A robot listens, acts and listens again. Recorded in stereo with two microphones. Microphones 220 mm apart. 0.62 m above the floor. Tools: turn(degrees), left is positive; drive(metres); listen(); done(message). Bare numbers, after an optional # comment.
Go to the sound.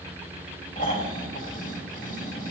# The snoring: about 40° left or 140° left.
turn(40)
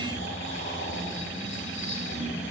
# So it is at 100° left.
turn(100)
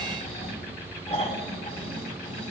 # The snoring is now 35° left.
turn(35)
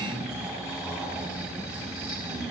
drive(1.0)
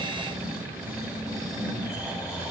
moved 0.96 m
drive(1.0)
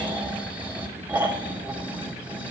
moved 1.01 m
# The snoring is now 10° right.
turn(-10)
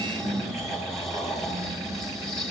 drive(1.0)
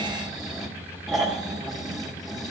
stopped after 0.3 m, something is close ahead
done("I am next to the snoring.")